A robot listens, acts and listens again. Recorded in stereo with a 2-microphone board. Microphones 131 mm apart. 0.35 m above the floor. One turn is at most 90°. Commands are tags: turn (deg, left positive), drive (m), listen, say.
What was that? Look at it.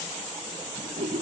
<turn deg="-60"/>
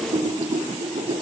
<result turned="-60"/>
<turn deg="-55"/>
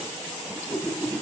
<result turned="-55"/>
<say>Facing the whoosh, under 1 m away.</say>